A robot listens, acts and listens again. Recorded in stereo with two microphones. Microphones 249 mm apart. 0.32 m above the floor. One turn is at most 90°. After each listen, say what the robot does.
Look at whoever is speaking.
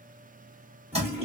Keep listening.
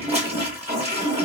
Keep listening.
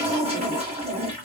I can't make out anyone speaking to turn to.